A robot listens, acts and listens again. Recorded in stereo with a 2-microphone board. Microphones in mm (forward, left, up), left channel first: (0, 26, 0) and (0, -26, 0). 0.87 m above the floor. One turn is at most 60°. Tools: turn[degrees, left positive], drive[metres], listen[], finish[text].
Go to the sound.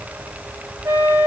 Thought: The flute: about 70° right or 110° right.
Action: turn[-60]
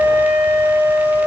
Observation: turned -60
Thought: So it is at 50° right.
Action: turn[-50]
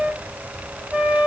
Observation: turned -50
Action: drive[1.0]
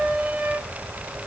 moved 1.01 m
Thought: The flute is now 10° right.
Action: turn[-10]
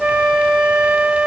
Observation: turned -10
Action: drive[1.0]
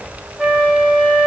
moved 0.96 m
Action: drive[1.0]
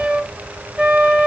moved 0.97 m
Thought: The flute is now 15° right.
Action: turn[-15]
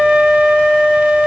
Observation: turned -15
Action: drive[1.0]
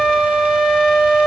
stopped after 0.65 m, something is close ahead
Action: finish[Arrived at the flute, straight ahead.]